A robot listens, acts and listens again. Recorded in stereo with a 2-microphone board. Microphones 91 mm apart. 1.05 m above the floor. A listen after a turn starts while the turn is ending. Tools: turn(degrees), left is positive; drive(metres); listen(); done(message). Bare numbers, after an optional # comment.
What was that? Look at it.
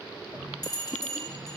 # The bell: about 50° left or 130° left.
turn(50)
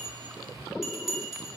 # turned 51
done("Facing the bell, 2 to 4 m away.")